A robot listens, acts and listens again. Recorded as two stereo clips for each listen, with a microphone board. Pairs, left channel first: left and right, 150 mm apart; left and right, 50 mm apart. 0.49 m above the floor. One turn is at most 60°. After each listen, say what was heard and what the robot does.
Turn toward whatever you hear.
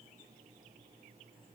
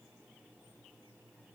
Keep listening.
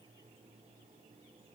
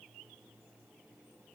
Keep listening.
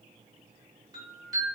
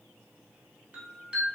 The chime: about 25° right or 155° right. Turn 25° right.
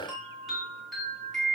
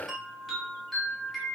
Found it: a chime, straight ahead.